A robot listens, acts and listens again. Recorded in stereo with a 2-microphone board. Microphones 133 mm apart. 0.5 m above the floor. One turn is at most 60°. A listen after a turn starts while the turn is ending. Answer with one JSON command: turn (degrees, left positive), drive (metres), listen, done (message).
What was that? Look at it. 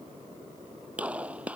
{"turn": -30}
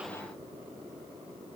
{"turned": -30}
{"listen": true}
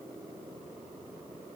{"done": "I heard a gunshot, but can't make it out now. It was about 20° left or 140° right."}